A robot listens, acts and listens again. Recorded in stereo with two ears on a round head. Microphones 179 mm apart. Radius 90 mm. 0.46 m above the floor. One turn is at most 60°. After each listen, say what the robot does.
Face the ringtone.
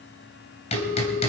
Turn 60° left.
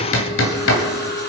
Turn 30° left.
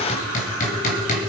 Keep listening.
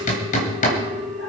Facing the ringtone.